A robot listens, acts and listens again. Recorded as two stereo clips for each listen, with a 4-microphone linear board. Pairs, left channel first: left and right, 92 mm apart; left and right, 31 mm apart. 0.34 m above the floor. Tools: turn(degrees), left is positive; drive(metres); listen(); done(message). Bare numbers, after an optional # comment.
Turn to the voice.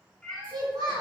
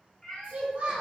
# The child speaking: about 45° right or 135° right.
turn(-45)
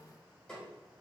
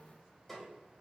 listen()
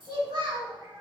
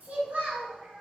# So it is at 80° right.
turn(-80)
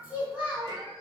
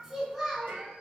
# The child speaking is now 20° right.
turn(-20)
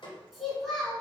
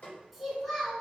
done("Found it: a child speaking, straight ahead, 2 to 4 m away.")